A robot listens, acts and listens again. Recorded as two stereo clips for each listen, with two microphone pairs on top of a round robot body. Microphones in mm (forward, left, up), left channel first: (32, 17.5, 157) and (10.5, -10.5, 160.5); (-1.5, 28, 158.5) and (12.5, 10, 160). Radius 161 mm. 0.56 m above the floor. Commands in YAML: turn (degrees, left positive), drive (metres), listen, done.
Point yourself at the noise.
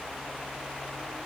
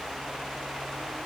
listen: true
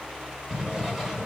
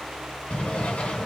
turn: 150
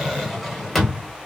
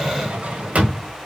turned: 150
turn: -35
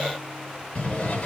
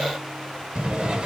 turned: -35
done: "Found it: a drawer, straight ahead."